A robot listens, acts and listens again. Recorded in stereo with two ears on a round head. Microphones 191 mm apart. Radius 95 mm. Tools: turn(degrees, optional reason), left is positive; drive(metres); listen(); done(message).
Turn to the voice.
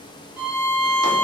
listen()
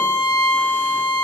listen()
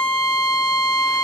done("I can't make out anyone speaking to turn to.")